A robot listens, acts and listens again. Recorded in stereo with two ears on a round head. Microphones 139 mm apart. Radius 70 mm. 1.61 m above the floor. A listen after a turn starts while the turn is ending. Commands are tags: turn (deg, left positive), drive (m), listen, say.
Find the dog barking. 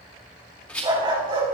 <turn deg="-35"/>
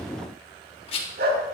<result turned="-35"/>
<turn deg="-105"/>
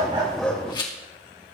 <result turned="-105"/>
<listen/>
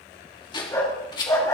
<turn deg="25"/>
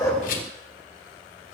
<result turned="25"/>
<listen/>
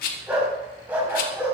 <turn deg="-10"/>
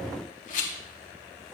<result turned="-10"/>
<say>Found it: a dog barking, straight ahead.</say>